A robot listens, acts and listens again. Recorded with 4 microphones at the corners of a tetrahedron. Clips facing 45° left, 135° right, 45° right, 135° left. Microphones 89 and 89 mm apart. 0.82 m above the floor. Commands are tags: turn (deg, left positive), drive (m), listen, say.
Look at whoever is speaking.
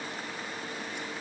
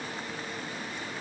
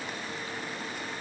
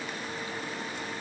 <listen/>
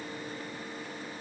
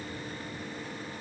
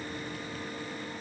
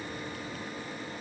<listen/>
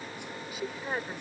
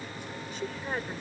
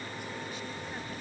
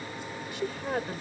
<turn deg="130"/>
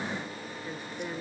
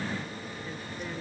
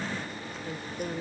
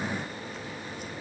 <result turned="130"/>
<listen/>
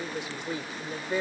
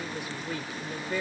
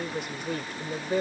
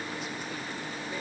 <turn deg="-20"/>
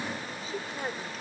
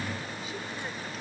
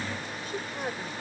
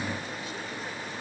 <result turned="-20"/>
<listen/>
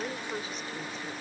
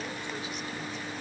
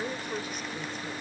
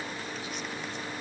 <listen/>
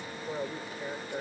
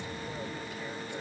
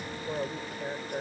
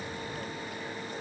<say>Found it: a woman speaking, straight ahead.</say>